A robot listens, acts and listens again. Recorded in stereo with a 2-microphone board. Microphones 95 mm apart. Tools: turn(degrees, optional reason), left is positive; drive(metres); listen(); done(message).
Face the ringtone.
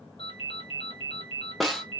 turn(degrees=90)
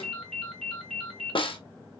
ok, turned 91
done("Facing the ringtone.")